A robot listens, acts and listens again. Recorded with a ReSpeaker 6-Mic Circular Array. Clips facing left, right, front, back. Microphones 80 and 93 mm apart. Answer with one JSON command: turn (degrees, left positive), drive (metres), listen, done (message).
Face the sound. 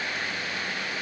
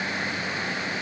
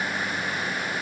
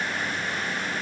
{"listen": true}
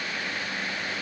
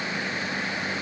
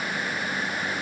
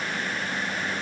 {"listen": true}
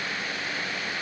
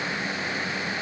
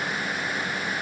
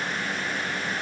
{"done": "I can't make out anything to turn to."}